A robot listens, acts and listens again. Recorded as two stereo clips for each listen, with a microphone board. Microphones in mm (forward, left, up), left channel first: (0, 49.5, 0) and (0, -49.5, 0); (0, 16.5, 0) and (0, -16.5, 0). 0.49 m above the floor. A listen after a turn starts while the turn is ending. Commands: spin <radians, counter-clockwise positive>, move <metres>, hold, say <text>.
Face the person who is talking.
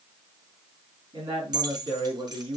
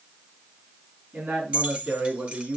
spin -0.96
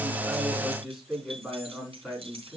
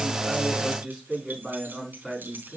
say Found it: a man speaking, straight ahead, over 4 m away.